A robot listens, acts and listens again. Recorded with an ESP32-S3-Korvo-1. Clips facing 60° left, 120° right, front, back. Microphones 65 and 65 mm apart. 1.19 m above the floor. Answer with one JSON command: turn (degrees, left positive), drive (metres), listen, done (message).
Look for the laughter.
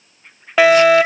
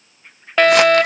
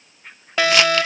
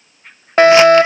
{"listen": true}
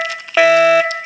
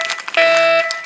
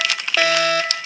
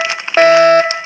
{"listen": true}
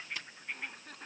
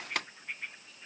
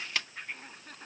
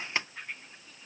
{"turn": 30}
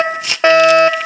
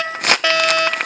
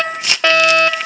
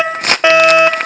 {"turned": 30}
{"listen": true}
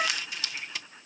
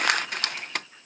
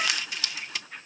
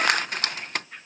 {"listen": true}
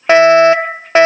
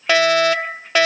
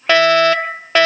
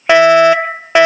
{"done": "I heard laughter from this way, but can't make it out now."}